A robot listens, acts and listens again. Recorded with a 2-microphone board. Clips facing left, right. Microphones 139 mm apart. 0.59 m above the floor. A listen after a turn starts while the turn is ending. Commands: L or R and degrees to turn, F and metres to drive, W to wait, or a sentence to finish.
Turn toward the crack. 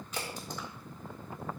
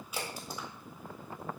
R30
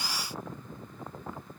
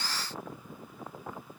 W
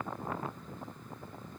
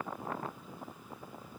I heard a crack, but can't make it out now. It was about 20° left or 140° right.